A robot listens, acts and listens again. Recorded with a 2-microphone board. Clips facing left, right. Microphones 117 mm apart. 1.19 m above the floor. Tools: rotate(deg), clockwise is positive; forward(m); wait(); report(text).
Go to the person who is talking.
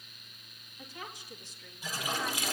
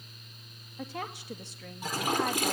rotate(70)
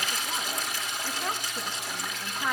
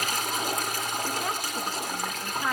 forward(1.0)
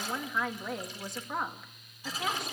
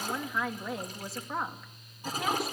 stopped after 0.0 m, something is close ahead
report("Something is in my way. I am facing the woman speaking but have not reached it.")